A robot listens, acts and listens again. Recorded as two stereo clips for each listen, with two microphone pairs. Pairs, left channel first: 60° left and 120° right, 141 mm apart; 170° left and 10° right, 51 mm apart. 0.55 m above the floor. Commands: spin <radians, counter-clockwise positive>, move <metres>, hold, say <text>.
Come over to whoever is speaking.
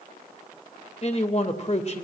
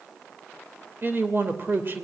spin 0.52
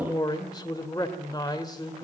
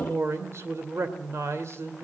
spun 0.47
move 1.0
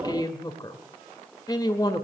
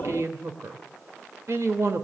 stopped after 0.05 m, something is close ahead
say Blocked. The man speaking is further on, straight ahead.